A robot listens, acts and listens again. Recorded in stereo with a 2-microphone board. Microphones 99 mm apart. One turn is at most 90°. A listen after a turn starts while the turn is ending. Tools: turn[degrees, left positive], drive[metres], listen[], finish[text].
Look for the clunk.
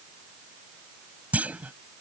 Action: turn[-30]
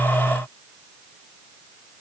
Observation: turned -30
Action: listen[]
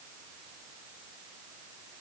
Action: finish[I heard a clunk, but can't make it out now. It was about 15° left or 135° right.]